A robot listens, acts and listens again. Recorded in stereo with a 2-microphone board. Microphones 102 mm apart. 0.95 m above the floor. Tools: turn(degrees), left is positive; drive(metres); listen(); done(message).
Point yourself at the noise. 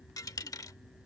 turn(degrees=35)
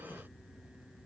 listen()
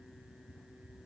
done("I heard a dropped coin, but can't make it out now. It was about straight ahead or 110° left.")